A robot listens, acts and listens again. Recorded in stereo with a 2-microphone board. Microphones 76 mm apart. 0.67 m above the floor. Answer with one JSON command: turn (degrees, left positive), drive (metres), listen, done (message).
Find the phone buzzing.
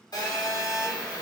{"turn": 65}
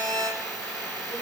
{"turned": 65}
{"turn": 10}
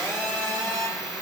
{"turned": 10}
{"done": "Found it: a phone buzzing, straight ahead, 1 to 2 m away."}